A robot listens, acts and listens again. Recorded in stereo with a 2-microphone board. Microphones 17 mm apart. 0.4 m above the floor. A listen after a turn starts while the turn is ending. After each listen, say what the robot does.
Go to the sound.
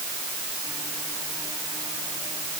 Keep listening.
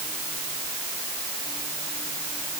Keep listening.
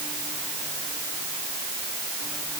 I can't make out anything.